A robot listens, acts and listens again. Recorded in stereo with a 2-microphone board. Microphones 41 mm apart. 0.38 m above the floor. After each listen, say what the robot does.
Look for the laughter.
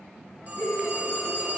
Turn 65° left.
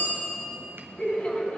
Turn 35° left.
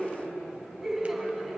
Found it: laughter, straight ahead.